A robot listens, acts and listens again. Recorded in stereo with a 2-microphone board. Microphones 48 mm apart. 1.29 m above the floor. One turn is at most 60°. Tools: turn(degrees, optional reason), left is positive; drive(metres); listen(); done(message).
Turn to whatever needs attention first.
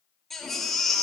turn(degrees=30)
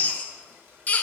turn(degrees=60, reason="So it is at 145° left.")
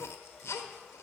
turn(degrees=60, reason="The baby crying is now 90° left.")
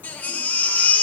turn(degrees=40, reason="The baby crying is now 40° left.")
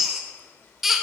done("Found it: a baby crying, straight ahead, 1 to 2 m away.")